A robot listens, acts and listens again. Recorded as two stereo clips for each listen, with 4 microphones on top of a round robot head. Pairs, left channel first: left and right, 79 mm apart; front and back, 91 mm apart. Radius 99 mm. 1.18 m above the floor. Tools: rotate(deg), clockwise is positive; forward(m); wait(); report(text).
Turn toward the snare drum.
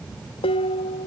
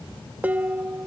wait()
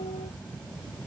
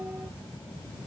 wait()
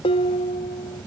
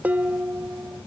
report("I can't make out a snare drum, only dishes clattering.")